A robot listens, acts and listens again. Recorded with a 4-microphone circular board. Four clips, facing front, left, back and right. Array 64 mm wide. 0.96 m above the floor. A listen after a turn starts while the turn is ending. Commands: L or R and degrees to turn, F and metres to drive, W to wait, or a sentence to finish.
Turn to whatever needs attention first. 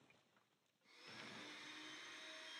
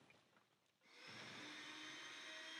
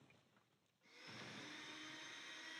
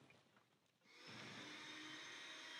W
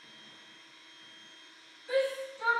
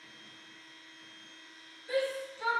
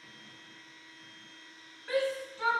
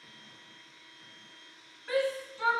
R130
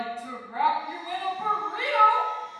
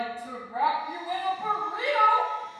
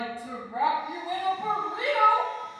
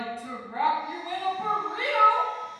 R35
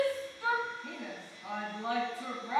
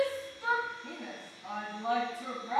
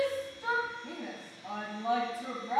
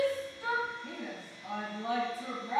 Found it: a shout, straight ahead, 1 to 2 m away.